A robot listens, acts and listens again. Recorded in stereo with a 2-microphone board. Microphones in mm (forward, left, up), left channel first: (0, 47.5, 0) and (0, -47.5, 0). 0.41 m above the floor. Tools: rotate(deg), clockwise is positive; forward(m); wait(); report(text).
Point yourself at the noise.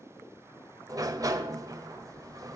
rotate(35)
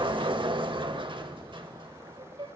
rotate(100)
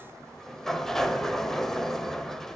report("Found it: a sliding door, straight ahead.")